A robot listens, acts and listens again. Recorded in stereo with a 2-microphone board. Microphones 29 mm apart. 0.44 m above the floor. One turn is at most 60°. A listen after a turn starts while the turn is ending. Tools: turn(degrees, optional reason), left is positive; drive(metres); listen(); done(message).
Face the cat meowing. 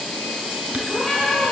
turn(degrees=25, reason="The cat meowing: about 25° left or 155° left.")
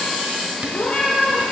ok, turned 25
turn(degrees=60, reason="So it is at 130° left.")
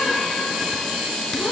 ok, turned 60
turn(degrees=60, reason="Nothing new. It was at 70° left.")
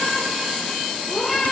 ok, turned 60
done("Facing the cat meowing.")